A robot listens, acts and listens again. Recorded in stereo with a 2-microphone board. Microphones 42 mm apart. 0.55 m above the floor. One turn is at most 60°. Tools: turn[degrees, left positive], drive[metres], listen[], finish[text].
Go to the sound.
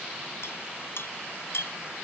Action: turn[60]
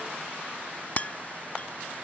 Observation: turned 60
Thought: So it is at 35° left.
Action: turn[35]
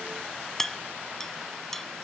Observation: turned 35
Thought: The clink is now 10° left.
Action: turn[10]
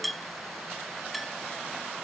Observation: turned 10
Action: drive[1.0]
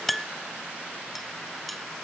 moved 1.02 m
Action: drive[1.0]
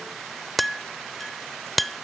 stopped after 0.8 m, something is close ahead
Action: finish[Arrived at the clink, straight ahead.]